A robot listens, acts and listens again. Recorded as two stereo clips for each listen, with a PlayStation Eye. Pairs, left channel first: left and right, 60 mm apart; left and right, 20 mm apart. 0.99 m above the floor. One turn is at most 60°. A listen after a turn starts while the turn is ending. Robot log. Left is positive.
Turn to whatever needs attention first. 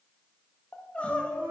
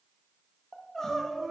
note: The crying: about 20° left or 160° left.
cmd yaw +20
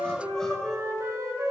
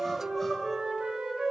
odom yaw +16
cmd idle
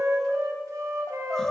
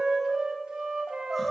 end: Facing the crying, under 1 m away.